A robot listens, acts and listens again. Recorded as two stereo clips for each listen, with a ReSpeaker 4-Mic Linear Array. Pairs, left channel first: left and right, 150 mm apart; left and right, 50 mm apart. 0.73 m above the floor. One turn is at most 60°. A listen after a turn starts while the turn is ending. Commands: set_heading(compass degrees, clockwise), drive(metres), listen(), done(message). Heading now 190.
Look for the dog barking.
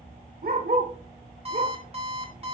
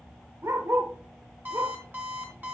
set_heading(250)
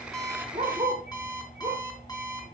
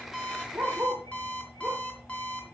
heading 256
set_heading(281)
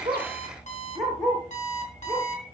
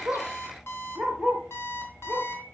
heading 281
done("Found it: a dog barking, straight ahead, 2 to 4 m away.")